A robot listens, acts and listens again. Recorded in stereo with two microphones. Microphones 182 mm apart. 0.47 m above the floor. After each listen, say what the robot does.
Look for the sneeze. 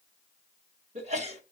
Turn 40° right.
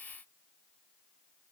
Keep listening.
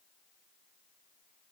I heard a sneeze, but can't make it out now. It was about straight ahead or 100° right.